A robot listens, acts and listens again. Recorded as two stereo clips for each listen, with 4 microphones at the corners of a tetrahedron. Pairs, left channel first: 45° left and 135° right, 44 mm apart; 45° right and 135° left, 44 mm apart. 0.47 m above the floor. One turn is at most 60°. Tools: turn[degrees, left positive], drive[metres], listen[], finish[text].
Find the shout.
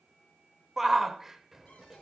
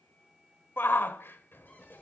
Thought: The shout: 55° right.
Action: turn[-55]
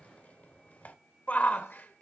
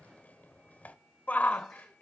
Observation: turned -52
Action: finish[Facing the shout, 1 to 2 m away.]